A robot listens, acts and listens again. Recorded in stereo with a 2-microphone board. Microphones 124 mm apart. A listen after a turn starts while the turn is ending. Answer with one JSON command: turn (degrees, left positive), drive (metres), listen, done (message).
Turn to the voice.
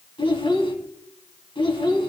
{"turn": 45}
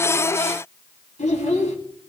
{"turn": 90}
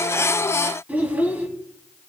{"turn": -15}
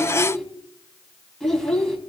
{"done": "Found it: a child speaking, straight ahead."}